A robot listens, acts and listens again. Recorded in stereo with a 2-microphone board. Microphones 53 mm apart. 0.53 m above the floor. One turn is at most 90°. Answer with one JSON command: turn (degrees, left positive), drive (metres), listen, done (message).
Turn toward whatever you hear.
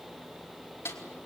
{"turn": 55}
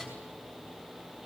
{"listen": true}
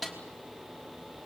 {"done": "Found it: a snare drum, straight ahead."}